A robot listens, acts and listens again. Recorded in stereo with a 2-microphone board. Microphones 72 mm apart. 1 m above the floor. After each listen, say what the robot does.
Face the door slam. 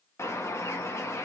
Keep listening.
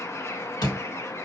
Turn 70° left.
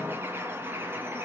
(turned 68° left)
Keep listening.
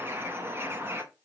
I heard a door slam, but can't make it out now. It was about straight ahead or 45° left.